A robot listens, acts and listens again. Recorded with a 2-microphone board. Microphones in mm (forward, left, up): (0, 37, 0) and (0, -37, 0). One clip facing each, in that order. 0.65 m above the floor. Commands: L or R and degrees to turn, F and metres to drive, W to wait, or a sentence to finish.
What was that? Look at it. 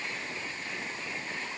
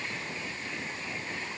W
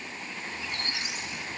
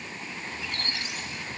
L20
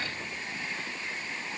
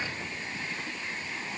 W
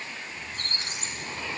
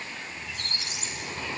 L140
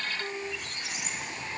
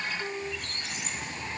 Facing the squeak, 1 to 2 m away.